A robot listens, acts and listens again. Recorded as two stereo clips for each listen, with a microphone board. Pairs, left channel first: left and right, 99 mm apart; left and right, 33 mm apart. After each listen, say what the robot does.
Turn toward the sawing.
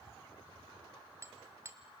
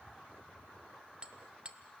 Keep listening.
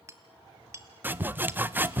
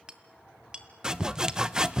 Turn 20° right.
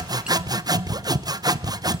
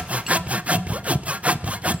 Turn 140° right.
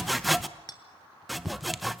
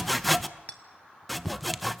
Found it: sawing, straight ahead, under 1 m away.